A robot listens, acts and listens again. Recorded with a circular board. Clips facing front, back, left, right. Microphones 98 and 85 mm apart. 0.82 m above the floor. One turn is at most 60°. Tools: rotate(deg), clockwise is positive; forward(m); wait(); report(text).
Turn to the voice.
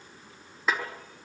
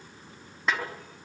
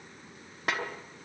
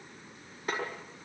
wait()
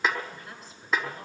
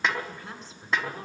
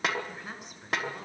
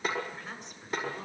rotate(-60)
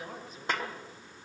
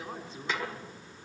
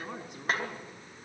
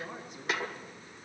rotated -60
rotate(-60)
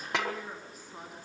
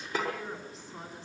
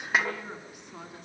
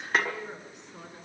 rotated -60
rotate(-60)
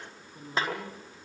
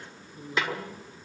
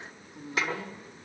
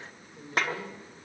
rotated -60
rotate(-15)
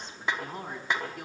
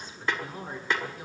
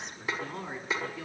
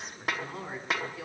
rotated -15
report("Found it: a woman speaking, straight ahead, over 4 m away.")